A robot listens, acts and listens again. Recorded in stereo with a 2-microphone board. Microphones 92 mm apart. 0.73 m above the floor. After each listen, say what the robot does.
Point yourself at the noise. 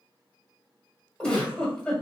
Turn 30° left.
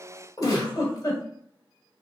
Turn 140° left.
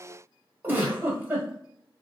Turn 20° right.
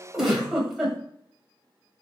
Found it: a giggle, straight ahead.